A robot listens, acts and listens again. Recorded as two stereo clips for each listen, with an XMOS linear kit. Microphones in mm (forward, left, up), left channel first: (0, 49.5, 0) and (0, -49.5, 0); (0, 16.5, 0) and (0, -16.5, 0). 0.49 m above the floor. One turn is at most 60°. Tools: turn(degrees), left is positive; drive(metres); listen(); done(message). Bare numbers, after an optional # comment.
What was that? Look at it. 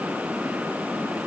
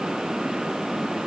listen()
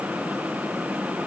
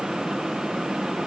listen()
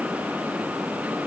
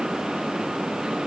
done("I can't make out anything to turn to.")